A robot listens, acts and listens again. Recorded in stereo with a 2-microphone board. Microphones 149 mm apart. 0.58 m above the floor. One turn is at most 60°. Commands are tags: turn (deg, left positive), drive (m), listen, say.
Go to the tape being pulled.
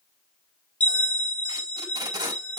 <turn deg="-25"/>
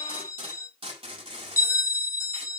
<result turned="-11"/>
<turn deg="-60"/>
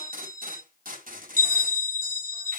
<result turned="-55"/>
<turn deg="-60"/>
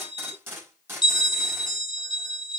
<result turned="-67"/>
<turn deg="-15"/>
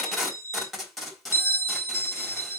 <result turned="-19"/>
<drive m="1.0"/>
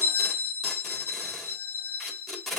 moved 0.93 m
<drive m="1.0"/>
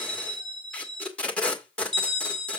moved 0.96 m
<turn deg="10"/>
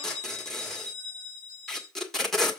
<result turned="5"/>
<drive m="1.0"/>
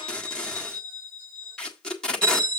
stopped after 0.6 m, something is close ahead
<turn deg="10"/>
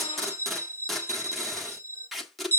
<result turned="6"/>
<say>Arrived at the tape being pulled, straight ahead.</say>